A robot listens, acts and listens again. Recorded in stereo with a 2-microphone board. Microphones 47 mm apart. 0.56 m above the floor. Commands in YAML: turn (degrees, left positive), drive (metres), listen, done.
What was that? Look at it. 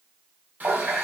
turn: -40
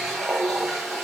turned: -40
done: "Facing the running tap."